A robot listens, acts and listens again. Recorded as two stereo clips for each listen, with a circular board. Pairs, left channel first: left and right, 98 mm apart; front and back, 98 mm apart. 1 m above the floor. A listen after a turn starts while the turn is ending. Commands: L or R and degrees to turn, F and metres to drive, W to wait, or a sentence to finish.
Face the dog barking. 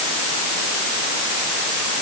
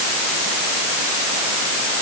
W
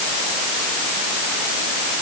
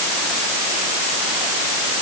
W
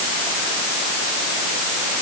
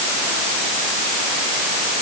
I can't make out a dog barking.